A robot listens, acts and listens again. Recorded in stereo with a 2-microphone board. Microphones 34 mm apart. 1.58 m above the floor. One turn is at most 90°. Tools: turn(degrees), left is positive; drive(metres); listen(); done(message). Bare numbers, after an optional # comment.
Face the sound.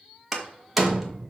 turn(30)
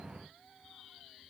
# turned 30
listen()
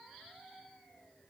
done("I heard a door slam, but can't make it out now. It was about 30° right or 150° left.")